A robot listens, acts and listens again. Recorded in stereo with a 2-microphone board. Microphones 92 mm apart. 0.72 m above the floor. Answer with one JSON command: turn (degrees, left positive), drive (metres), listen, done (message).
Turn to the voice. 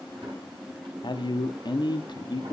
{"turn": 55}
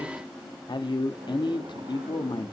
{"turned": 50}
{"turn": 65}
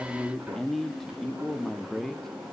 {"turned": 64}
{"done": "Found it: a man speaking, straight ahead, under 1 m away."}